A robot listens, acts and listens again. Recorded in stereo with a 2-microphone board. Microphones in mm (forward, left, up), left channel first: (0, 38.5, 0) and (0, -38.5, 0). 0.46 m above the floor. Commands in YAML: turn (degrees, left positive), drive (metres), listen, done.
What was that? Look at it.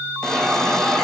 turn: 30
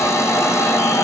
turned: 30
turn: 140
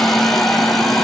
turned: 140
done: "Facing the hiss, 2 to 4 m away."